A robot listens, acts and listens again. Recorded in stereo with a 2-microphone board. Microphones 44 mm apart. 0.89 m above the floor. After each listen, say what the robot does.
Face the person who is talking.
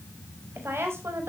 Turn 70° right.
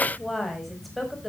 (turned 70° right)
Found it: a woman speaking, straight ahead, over 4 m away.